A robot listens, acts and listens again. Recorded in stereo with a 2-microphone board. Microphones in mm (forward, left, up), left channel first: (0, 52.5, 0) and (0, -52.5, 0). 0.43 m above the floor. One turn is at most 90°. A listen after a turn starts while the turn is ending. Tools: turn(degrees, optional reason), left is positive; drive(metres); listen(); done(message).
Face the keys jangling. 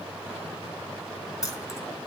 turn(degrees=35, reason="The keys jangling: about 35° left or 145° left.")
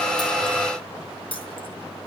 turn(degrees=90, reason="So it is at 120° left.")
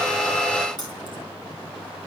turn(degrees=45, reason="The keys jangling is now 45° left.")
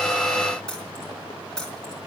done("Facing the keys jangling.")